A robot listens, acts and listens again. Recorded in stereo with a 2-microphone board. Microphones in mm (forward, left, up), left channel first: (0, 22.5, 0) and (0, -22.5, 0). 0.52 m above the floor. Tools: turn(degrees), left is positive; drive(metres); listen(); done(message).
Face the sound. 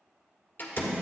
turn(degrees=45)
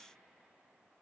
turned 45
listen()
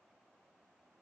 done("I heard a door slam, but can't make it out now. It was about straight ahead or 90° left.")